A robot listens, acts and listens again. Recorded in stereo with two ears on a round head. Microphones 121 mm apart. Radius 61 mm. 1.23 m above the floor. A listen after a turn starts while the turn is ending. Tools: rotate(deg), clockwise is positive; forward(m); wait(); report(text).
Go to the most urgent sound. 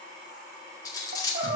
rotate(70)
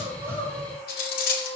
forward(1.0)
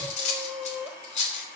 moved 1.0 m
forward(1.0)
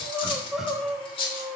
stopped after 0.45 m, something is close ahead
report("Arrived at the crying, straight ahead.")